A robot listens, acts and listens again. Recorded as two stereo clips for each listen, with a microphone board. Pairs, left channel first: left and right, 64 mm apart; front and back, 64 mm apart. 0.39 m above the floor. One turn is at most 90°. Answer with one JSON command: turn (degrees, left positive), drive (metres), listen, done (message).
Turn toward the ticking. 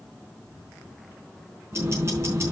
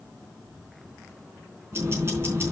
{"turn": -90}
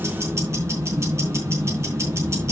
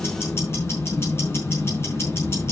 {"turn": -45}
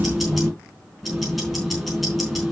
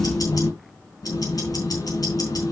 {"done": "Found it: ticking, straight ahead, over 4 m away."}